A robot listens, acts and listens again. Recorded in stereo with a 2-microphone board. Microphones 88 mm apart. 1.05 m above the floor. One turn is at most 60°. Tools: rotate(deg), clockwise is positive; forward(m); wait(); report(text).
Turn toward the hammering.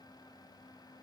wait()
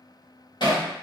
rotate(-55)
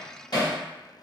rotate(-60)
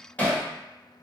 rotate(-20)
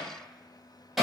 report("Facing the hammering, 1 to 2 m away.")